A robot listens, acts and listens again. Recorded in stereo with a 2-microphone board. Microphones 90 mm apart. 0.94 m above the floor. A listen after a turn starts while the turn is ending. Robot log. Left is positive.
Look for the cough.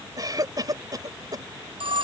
note: The cough: about 45° right or 135° right.
cmd yaw -45
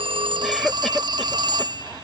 end: Facing the cough.